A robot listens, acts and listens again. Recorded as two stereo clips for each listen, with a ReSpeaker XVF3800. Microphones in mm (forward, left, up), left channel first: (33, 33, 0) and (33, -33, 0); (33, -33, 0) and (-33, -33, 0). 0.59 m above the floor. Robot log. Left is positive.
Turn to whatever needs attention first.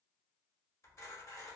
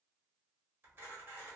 cmd idle
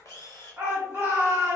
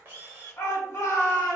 note: The shout: 30° right.
cmd yaw -30
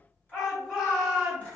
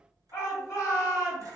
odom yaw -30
end: Found it: a shout, straight ahead.